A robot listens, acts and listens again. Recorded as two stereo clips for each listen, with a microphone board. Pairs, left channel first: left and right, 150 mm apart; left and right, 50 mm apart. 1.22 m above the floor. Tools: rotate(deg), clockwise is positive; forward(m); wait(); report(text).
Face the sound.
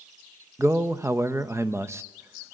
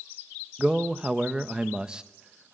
rotate(15)
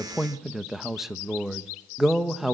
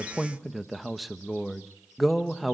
report("Found it: a man speaking, straight ahead.")